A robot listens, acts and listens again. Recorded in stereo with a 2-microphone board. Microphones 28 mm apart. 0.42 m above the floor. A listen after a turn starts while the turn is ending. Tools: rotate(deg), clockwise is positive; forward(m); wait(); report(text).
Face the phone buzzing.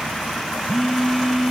rotate(-30)
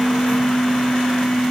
rotate(-150)
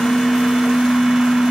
rotate(35)
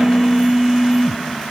report("Found it: a phone buzzing, straight ahead.")